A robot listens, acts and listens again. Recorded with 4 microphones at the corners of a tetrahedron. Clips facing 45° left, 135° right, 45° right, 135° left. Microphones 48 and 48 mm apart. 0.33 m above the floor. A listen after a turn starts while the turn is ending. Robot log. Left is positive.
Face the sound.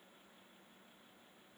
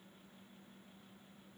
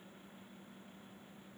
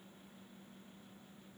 cmd idle
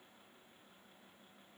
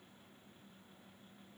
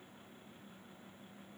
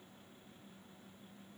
cmd idle
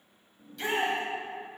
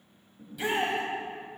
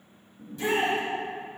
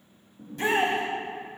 note: The shout: 145° left.
cmd yaw +145
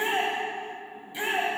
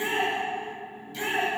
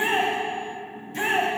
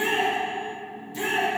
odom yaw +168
note: The shout is now 25° right.
cmd yaw -25
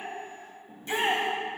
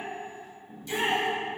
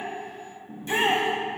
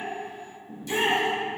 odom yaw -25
end: Facing the shout.